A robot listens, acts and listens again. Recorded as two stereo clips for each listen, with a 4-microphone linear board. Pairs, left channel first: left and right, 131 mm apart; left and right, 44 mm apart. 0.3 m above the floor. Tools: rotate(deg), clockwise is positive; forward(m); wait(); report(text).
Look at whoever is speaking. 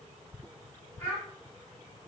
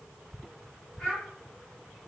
rotate(-15)
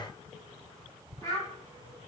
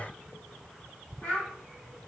rotate(-155)
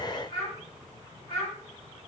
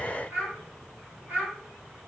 rotate(65)
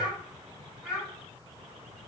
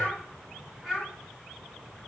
rotate(10)
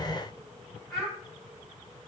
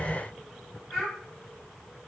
report("Found it: a child speaking, straight ahead.")